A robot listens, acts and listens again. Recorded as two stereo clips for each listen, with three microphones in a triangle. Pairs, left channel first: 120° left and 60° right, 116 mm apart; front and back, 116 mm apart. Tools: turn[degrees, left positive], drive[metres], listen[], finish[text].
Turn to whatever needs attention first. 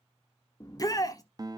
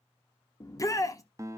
Thought: The shout: 65° left.
Action: turn[65]
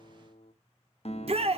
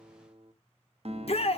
Thought: The shout is now 30° right.
Action: turn[-30]
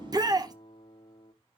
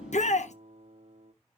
Action: finish[Facing the shout.]